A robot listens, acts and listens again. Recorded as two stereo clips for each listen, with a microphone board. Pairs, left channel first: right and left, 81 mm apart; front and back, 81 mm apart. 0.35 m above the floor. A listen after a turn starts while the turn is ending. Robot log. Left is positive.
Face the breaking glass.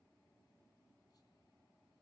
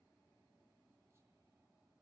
cmd idle
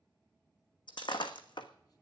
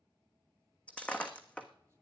note: The breaking glass: 75° right.
cmd yaw -75
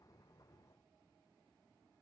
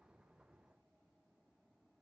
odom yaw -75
end: Facing where the breaking glass came from. I can't hear it now.